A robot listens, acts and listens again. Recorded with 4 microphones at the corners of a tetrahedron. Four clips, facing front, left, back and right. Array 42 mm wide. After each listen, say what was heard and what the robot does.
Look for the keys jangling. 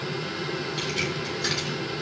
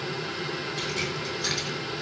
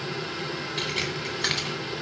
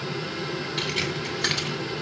The keys jangling: 140° right. Turn 140° right.
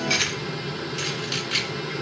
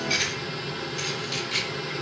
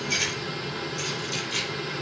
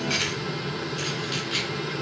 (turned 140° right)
The keys jangling is now 20° right. Turn 20° right.
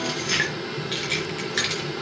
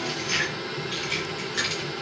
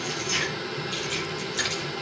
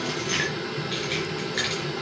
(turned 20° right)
The keys jangling is now 15° right. Turn 15° right.
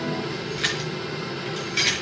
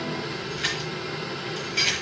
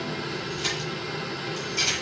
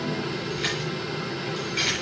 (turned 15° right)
Facing the keys jangling, over 4 m away.